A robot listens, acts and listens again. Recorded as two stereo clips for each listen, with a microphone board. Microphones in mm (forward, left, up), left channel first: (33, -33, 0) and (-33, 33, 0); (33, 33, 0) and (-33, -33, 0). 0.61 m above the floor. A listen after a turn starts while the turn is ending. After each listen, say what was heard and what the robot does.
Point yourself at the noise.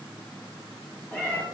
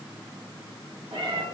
The cat meowing: 115° right. Turn 115° right.
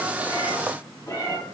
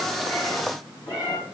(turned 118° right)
The cat meowing is now 15° left. Turn 15° left.
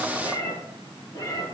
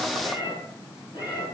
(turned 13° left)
The cat meowing is now 10° left. Turn 10° left.
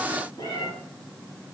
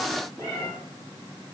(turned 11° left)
Facing the cat meowing.